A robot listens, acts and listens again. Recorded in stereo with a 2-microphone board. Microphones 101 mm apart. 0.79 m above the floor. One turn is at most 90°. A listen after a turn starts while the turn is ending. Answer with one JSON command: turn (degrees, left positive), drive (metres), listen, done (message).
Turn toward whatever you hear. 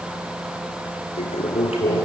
{"turn": 90}
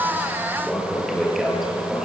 {"done": "Facing the toilet flushing, over 4 m away."}